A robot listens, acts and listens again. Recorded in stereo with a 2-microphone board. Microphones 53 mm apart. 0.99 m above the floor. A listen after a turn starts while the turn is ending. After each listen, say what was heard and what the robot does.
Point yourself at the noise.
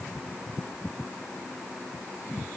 Keep listening.
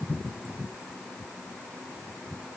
Keep listening.
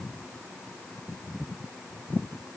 I can't make out anything.